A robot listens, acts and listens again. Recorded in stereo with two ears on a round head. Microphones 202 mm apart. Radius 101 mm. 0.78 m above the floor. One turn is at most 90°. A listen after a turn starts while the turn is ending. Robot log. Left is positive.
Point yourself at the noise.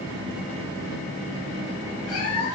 note: The cat meowing: about 70° left or 110° left.
cmd yaw +70
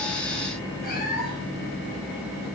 cmd idle
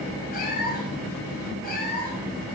note: So it is at 40° left.
cmd yaw +40
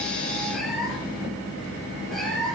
end: Found it: a cat meowing, straight ahead.